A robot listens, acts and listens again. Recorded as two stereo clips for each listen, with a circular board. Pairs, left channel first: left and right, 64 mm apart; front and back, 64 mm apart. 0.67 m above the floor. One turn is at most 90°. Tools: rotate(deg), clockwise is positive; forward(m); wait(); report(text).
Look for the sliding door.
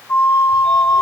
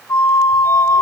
wait()
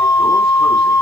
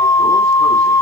wait()
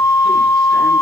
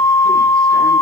report("I can't make out a sliding door, only a flute.")